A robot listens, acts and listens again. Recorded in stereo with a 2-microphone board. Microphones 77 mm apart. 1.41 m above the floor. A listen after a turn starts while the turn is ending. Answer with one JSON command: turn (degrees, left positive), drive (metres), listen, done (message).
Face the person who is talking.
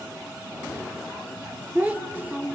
{"turn": -20}
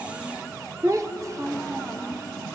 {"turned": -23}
{"turn": -135}
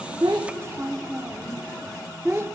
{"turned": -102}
{"turn": -35}
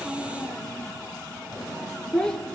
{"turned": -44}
{"turn": 10}
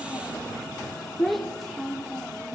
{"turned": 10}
{"done": "Found it: a child speaking, straight ahead, 2 to 4 m away."}